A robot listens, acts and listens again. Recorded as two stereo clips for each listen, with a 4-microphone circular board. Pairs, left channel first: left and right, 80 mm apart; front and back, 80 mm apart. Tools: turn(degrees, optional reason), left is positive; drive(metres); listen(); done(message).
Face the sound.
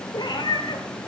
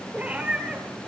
turn(degrees=105, reason="The cat meowing: 105° left.")
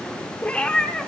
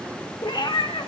turn(degrees=10, reason="The cat meowing is now 10° left.")
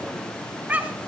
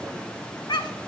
turn(degrees=-20, reason="The cat meowing is now 20° right.")
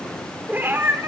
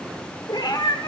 turn(degrees=-30, reason="The cat meowing is now 30° right.")
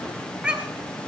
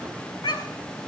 turn(degrees=-15, reason="The cat meowing is now 15° right.")
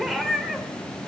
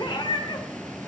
done("Facing the cat meowing.")